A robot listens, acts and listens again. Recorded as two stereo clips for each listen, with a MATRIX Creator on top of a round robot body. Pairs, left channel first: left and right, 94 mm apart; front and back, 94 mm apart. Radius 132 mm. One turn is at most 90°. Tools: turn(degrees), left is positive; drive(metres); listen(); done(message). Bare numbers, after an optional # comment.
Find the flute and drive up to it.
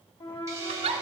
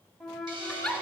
# The flute: 90° left.
turn(90)
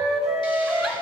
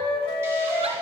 drive(1.0)
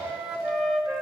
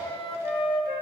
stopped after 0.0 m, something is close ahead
done("Blocked. The flute is further on, straight ahead.")